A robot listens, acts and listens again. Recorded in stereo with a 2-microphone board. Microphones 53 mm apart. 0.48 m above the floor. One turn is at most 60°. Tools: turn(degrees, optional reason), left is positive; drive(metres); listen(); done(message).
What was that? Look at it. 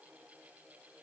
listen()
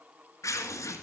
turn(degrees=60)
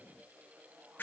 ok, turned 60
turn(degrees=35, reason="So it is at 35° left.")
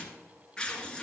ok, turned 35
turn(degrees=15, reason="The tearing paper is now 15° left.")
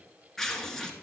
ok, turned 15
done("Facing the tearing paper.")